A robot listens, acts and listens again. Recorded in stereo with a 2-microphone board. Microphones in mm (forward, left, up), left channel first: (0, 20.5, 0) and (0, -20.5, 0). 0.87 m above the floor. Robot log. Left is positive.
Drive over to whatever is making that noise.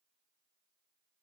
cmd idle
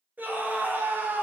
note: The scream: about 45° right or 135° right.
cmd yaw -45
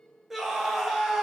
cmd fwd 1.0
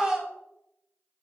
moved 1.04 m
note: The scream is now 15° right.
cmd yaw -15
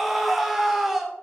cmd fwd 1.0
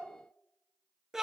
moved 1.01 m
note: The scream is now 10° right.
cmd yaw -10
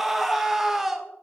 note: The scream is now 10° right.
cmd yaw -10
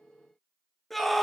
cmd fwd 1.0
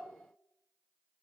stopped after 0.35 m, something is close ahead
cmd idle
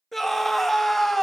end: Arrived at the scream, straight ahead.